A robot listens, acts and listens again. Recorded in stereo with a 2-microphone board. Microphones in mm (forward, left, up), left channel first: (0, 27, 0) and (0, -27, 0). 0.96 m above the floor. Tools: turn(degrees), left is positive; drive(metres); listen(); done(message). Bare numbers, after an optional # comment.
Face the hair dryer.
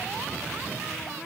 listen()
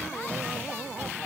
listen()
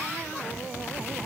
done("I can't make out a hair dryer.")